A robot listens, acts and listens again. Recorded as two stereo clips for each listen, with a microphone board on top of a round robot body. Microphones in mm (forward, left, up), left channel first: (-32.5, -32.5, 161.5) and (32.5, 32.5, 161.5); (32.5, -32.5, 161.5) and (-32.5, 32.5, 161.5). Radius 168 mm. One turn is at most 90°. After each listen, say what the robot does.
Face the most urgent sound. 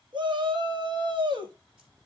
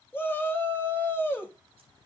Turn 20° left.
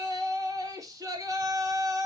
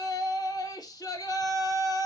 Found it: a shout, straight ahead.